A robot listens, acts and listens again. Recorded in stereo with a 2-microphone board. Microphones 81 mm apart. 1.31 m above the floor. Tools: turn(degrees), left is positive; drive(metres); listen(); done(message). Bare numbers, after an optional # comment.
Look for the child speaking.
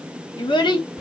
turn(90)
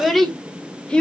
# So it is at 15° left.
turn(15)
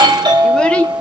# The child speaking is now 15° left.
turn(15)
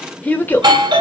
# The child speaking is now 25° left.
turn(25)
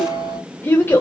# The child speaking is now 30° left.
turn(30)
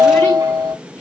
# The child speaking is now 20° left.
turn(20)
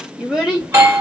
done("Found it: a child speaking, straight ahead, 1 to 2 m away.")